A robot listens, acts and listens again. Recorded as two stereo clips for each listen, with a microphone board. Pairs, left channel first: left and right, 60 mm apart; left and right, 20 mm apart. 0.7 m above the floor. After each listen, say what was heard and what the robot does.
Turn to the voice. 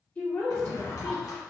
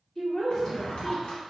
The woman speaking: about 25° left or 155° left. Turn 25° left.
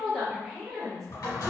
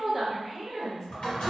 Facing the woman speaking.